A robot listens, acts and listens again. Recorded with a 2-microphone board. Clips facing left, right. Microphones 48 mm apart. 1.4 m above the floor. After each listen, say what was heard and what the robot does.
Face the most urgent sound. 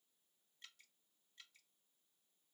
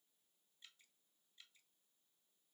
Keep listening.
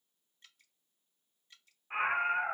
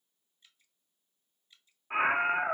The scream: about 20° right or 160° right. Turn 20° right.
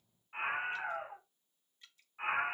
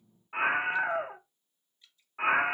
So it is at 140° right. Turn 140° right.
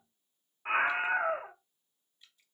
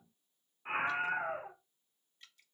The scream is now 35° left. Turn 35° left.
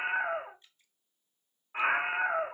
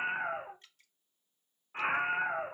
The scream is now 20° left. Turn 20° left.
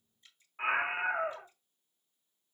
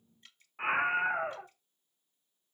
Found it: a scream, straight ahead.